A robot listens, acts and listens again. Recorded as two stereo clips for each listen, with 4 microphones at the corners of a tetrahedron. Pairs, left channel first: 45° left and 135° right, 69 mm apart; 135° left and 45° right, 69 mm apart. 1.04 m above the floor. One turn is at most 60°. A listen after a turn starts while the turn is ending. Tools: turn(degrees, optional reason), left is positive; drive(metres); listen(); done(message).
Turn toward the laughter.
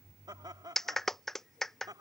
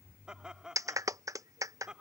turn(degrees=-60, reason="The laughter: 125° right.")
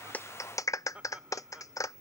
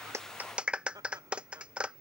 turn(degrees=-60, reason="The laughter is now 60° right.")
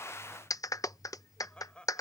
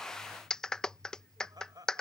turn(degrees=-30, reason="The laughter is now 30° right.")
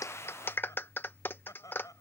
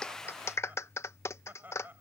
turn(degrees=15, reason="The laughter is now 15° left.")
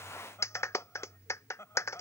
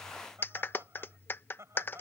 done("Facing the laughter.")